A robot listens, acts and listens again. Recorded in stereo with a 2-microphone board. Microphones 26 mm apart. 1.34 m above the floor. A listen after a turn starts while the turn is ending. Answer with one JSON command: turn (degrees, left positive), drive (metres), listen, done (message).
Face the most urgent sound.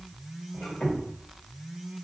{"listen": true}
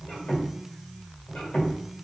{"listen": true}
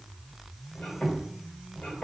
{"done": "I can't make out anything urgent, only a squeak."}